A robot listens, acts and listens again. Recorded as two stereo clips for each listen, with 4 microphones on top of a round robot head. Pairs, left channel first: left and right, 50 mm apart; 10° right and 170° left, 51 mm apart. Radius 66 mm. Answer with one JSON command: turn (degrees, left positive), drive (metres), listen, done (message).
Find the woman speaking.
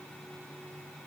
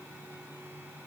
{"listen": true}
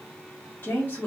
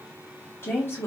{"turn": 25}
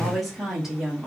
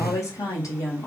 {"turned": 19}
{"turn": -10}
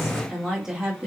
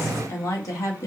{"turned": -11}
{"turn": -15}
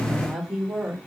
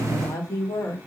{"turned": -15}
{"turn": -20}
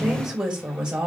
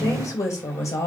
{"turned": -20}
{"turn": -15}
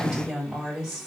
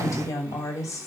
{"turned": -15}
{"done": "Facing the woman speaking."}